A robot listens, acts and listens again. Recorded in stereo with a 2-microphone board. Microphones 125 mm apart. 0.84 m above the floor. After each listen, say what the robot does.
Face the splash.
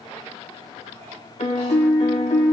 Keep listening.
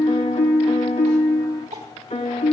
Keep listening.
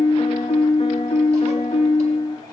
I can't make out a splash to turn to.